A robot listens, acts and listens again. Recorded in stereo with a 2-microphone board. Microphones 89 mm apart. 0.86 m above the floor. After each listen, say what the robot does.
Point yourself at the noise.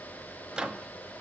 Turn 30° right.
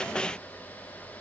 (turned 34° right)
Keep listening.
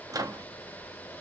Turn 135° right.
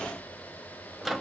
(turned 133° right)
Found it: a microwave, straight ahead.